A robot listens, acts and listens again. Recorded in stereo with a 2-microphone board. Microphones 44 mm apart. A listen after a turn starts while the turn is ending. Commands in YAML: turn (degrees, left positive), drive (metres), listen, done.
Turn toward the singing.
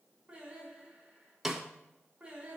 turn: -20
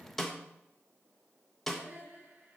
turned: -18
turn: -140
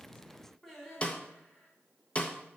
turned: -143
done: "Facing the singing."